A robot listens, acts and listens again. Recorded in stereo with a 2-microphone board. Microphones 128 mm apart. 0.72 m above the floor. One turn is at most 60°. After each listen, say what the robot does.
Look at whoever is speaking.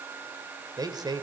Turn 30° right.
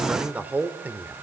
Turn 15° right.
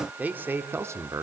Turn 25° right.
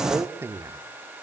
Turn 20° right.
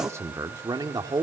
Turn 30° right.
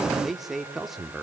Facing the man speaking, 1 to 2 m away.